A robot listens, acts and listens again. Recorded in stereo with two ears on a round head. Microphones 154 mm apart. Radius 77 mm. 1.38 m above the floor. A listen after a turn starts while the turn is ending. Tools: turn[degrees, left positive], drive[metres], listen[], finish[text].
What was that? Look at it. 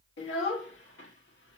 Thought: The child speaking: about 75° left or 105° left.
Action: turn[75]
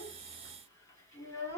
Thought: So it is at 15° left.
Action: turn[15]
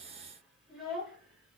Action: finish[Found it: a child speaking, straight ahead, 2 to 4 m away.]